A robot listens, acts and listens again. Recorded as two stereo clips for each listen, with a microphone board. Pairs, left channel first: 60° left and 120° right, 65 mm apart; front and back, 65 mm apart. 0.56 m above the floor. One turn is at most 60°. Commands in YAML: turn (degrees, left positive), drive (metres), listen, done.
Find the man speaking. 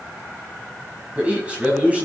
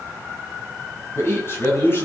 turn: -50
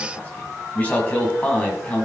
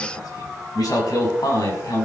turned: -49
turn: -10
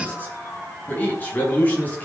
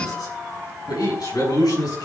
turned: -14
done: "Found it: a man speaking, straight ahead, over 4 m away."